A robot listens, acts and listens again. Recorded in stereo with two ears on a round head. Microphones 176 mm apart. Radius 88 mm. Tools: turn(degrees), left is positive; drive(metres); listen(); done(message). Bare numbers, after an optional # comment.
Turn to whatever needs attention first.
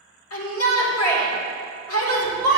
turn(90)
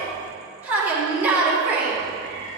# So it is at 10° right.
turn(-10)
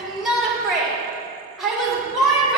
done("Found it: a shout, straight ahead.")